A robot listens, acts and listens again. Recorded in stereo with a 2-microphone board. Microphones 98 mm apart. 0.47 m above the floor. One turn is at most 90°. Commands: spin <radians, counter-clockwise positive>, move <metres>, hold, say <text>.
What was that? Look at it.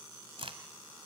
spin -1.31
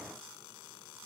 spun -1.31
hold
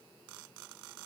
say I heard a crack, but can't make it out now. It was about straight ahead or 30° right.